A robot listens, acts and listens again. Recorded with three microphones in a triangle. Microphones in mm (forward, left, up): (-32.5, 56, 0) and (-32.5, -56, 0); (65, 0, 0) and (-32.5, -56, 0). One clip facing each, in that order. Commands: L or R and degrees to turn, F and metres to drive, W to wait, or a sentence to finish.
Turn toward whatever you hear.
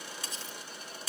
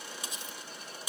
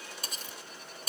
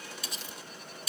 R15
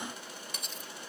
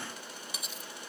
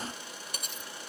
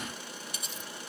Found it: cutlery clinking, straight ahead, 1 to 2 m away.